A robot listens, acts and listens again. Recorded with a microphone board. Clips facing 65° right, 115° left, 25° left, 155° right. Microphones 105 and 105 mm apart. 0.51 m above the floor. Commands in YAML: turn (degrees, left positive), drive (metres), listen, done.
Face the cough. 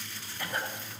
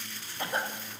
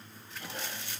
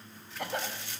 turn: 180
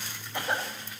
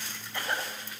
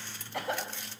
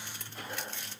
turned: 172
done: "Facing the cough, 2 to 4 m away."